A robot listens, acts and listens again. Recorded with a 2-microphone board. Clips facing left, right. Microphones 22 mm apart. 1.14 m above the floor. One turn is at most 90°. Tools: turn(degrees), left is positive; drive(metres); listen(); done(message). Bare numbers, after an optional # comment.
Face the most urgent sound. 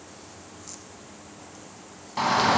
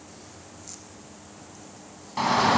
turn(30)
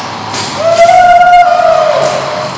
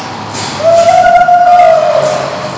# So it is at 140° left.
turn(90)
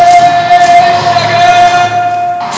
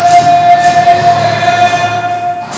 # The shout is now 80° left.
turn(80)
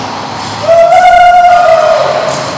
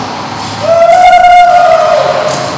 done("Facing the shout.")